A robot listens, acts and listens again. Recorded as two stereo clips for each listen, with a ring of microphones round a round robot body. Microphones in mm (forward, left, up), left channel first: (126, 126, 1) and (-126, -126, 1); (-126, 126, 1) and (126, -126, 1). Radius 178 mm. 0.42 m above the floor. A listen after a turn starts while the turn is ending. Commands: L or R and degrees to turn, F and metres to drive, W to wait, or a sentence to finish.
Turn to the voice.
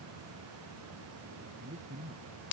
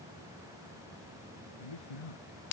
L155
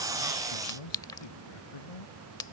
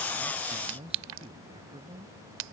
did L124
L30
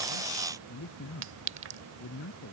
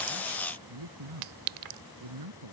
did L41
R15
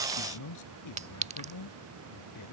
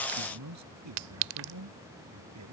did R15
Facing the man speaking.